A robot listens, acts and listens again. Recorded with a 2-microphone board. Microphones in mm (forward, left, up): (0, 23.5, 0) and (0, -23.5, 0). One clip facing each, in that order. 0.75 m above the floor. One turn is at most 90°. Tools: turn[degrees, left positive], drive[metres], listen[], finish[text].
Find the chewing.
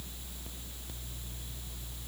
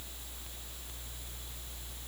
Action: listen[]
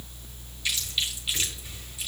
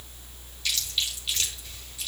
Thought: The chewing: about 20° left or 160° left.
Action: turn[20]
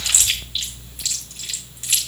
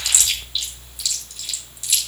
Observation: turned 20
Thought: So it is at 140° left.
Action: turn[90]
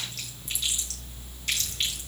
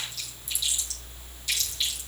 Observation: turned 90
Thought: Nothing new. It was at 50° left.
Action: turn[50]
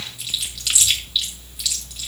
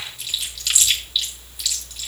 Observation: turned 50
Action: finish[Facing the chewing, over 4 m away.]